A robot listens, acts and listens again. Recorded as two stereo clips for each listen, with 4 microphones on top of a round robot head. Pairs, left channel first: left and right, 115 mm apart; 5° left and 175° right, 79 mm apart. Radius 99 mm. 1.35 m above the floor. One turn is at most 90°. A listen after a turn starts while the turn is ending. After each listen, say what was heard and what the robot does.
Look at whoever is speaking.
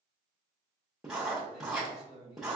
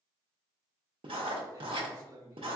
The man speaking: 140° left. Turn 90° left.
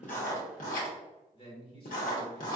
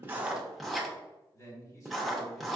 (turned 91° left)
The man speaking is now 50° left. Turn 50° left.
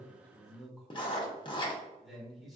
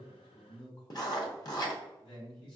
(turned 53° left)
Found it: a man speaking, straight ahead, 1 to 2 m away.